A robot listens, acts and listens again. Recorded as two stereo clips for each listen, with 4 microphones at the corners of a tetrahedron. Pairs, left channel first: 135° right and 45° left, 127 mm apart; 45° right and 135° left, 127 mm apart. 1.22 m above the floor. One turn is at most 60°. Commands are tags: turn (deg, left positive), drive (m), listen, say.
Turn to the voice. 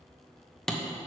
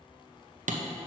<listen/>
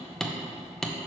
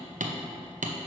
<listen/>
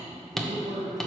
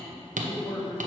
<turn deg="35"/>
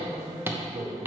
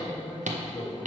<turn deg="15"/>
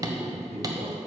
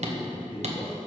<say>Facing the man speaking.</say>